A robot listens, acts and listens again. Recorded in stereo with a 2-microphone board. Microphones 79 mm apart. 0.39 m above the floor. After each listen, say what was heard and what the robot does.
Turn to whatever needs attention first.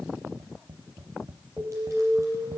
Turn 30° left.
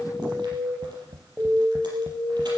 So it is at 20° right. Turn 20° right.
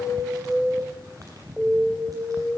Facing the alarm.